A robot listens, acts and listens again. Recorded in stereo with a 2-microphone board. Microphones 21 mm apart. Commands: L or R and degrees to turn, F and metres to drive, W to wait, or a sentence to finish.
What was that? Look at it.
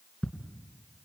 L30
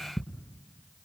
Found it: ticking, straight ahead, 2 to 4 m away.